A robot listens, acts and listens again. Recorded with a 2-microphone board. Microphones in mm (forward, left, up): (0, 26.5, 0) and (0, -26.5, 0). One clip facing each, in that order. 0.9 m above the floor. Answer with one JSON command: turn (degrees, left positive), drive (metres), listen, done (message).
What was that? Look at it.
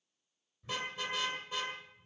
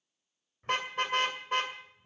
{"turn": -50}
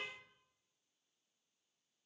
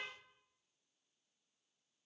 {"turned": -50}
{"listen": true}
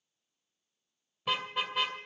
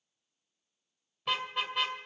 {"done": "Found it: a car horn, straight ahead."}